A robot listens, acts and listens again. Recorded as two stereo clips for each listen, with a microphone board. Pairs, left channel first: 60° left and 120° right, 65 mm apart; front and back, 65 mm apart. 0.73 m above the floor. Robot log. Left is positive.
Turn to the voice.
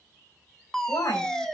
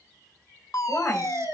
note: The woman speaking: 55° left.
cmd yaw +55
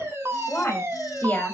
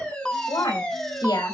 end: Found it: a woman speaking, straight ahead.